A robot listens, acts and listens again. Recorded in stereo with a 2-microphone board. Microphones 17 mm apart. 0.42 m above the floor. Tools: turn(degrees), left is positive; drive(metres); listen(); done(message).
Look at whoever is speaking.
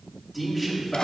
turn(degrees=30)
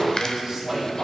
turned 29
turn(degrees=-20)
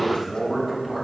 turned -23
done("Found it: a man speaking, straight ahead.")